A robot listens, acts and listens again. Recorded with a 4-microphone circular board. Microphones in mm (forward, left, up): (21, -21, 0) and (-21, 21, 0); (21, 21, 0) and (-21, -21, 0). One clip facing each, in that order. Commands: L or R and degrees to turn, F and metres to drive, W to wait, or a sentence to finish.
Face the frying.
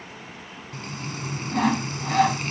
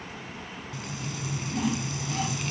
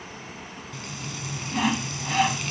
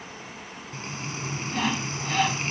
R85
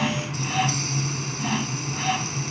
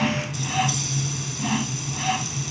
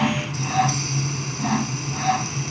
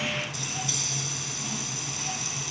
Facing the frying.